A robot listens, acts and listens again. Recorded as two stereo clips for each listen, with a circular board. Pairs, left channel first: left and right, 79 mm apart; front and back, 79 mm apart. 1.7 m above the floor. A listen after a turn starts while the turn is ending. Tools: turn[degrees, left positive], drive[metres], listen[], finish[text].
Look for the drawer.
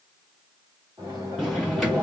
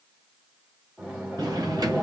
Thought: The drawer: 175° right.
Action: turn[-175]
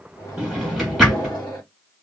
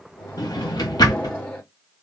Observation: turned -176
Action: finish[Facing the drawer, 1 to 2 m away.]